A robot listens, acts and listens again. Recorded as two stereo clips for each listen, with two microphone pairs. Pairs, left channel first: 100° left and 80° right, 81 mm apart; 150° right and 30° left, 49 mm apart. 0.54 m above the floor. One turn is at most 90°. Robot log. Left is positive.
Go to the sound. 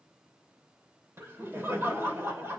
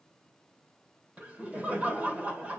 note: The laughter: 25° right.
cmd yaw -25
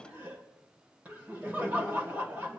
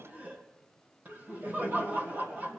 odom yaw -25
note: The laughter is now 10° right.
cmd yaw -10
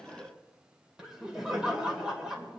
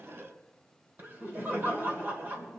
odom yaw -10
cmd fwd 1.0
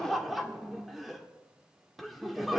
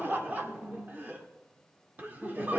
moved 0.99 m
note: The laughter is now 10° left.
cmd yaw +10
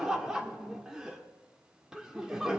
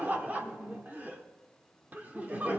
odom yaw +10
cmd fwd 1.0
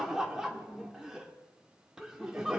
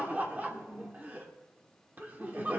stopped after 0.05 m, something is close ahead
end: Arrived at the laughter, straight ahead.